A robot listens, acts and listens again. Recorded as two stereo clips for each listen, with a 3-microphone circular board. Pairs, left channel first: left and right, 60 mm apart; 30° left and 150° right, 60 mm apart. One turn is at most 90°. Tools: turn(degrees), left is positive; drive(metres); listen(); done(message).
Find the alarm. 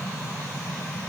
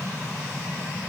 listen()
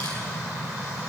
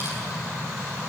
listen()
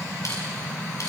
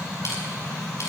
done("I can't make out an alarm.")